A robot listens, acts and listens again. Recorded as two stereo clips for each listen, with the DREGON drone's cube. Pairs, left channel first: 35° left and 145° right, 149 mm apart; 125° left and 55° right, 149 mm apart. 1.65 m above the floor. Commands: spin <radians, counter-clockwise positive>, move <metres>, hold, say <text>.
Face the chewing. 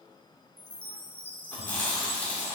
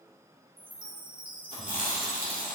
spin 1.92
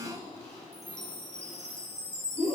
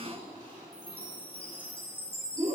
say Found it: chewing, straight ahead.